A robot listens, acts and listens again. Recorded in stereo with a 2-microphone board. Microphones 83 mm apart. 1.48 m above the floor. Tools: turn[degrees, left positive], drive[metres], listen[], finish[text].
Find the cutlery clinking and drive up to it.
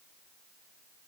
Action: listen[]
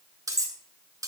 Thought: The cutlery clinking: about 45° right or 135° right.
Action: turn[-45]
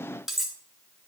Action: drive[1.0]
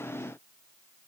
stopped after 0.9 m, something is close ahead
Action: listen[]
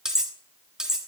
Thought: The cutlery clinking is now 10° right.
Action: turn[-10]
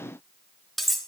Action: finish[I am next to the cutlery clinking.]